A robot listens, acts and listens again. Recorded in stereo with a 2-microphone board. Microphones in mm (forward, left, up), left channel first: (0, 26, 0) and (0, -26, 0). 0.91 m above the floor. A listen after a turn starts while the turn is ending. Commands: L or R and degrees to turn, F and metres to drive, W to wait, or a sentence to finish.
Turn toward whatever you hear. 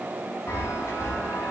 L60
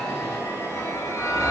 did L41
L75
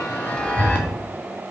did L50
L20
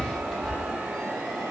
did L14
L10
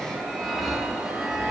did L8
Facing the chime.